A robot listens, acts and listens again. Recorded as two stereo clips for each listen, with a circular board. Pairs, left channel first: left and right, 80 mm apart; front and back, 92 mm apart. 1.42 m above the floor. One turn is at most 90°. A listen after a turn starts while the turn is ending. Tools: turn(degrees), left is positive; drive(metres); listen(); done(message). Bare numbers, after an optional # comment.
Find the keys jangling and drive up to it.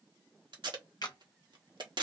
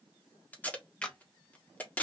listen()
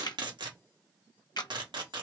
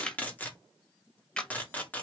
listen()
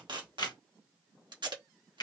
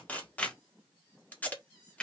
done("I can't make out keys jangling to turn to.")